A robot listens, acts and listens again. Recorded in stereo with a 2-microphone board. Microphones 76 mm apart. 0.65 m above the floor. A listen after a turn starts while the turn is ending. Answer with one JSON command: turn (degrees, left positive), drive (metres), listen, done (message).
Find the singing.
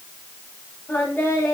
{"turn": 30}
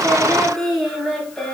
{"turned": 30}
{"turn": 10}
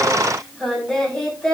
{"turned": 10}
{"turn": 10}
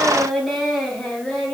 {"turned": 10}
{"done": "Facing the singing."}